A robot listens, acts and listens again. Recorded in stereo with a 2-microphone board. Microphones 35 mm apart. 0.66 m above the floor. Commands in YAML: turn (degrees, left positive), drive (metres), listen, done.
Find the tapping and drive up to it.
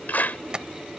turn: -25
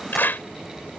listen: true
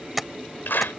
drive: 1.0
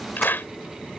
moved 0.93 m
listen: true
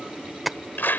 drive: 1.0
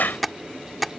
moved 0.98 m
drive: 1.0
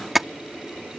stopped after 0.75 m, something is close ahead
turn: -10
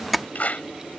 done: "I am next to the tapping."